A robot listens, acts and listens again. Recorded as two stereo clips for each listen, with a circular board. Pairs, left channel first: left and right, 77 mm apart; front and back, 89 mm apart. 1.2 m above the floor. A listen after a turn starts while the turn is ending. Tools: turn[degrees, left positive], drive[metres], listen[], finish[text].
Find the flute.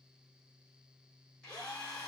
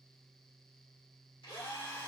Action: listen[]
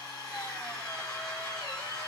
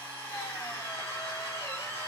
Action: listen[]
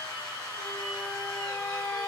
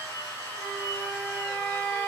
Thought: The flute: 50° left.
Action: turn[50]
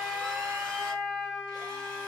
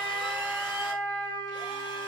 Action: finish[Found it: a flute, straight ahead.]